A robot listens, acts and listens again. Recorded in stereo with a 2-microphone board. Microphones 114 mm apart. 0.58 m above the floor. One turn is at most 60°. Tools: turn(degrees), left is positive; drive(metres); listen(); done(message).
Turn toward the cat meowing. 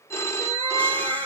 turn(degrees=-55)
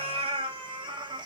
turn(degrees=-45)
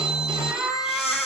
done("Found it: a cat meowing, straight ahead, 1 to 2 m away.")